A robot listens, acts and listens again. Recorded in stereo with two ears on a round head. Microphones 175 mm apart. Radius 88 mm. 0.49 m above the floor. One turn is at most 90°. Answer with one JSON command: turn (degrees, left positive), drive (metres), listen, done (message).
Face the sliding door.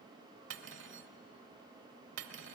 {"listen": true}
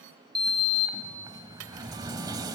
{"turn": -20}
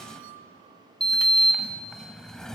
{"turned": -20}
{"done": "Facing the sliding door, 1 to 2 m away."}